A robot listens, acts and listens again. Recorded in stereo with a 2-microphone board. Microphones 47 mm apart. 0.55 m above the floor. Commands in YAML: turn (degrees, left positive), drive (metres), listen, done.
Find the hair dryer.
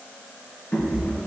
listen: true
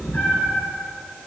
listen: true
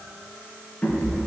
done: "I can't make out a hair dryer to turn to."